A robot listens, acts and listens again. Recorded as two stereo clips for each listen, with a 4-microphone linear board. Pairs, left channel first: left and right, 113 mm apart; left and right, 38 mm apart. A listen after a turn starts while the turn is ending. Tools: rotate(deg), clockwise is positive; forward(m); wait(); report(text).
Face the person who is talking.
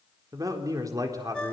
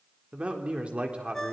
rotate(30)
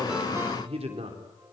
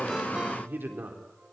rotate(115)
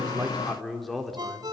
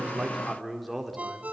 report("Facing the man speaking.")